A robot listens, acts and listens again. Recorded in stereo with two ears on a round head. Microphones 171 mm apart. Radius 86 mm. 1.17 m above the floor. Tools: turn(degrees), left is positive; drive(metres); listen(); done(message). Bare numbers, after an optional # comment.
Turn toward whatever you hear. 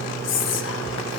turn(90)
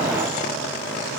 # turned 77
# Nothing new. It was at 15° left.
turn(15)
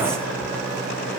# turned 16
listen()
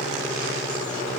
done("Facing where the whispering came from. I can't hear it now.")